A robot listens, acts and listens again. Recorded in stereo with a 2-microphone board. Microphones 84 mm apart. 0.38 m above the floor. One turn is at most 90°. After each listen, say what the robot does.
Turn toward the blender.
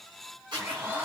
Turn 25° right.
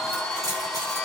Facing the blender.